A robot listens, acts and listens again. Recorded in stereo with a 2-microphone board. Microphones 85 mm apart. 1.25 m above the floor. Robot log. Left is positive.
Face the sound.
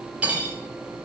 note: The cutlery clinking: about 15° right or 165° right.
cmd yaw -15
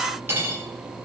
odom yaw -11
note: So it is at 155° right.
cmd yaw -155
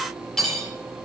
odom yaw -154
end: Facing the cutlery clinking.